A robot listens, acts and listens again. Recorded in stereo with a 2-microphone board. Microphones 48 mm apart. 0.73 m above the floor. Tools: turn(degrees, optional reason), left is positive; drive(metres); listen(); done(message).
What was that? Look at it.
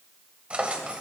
turn(degrees=-25, reason="The drawer: about 25° right or 155° right.")
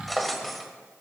done("Found it: a drawer, straight ahead, 1 to 2 m away.")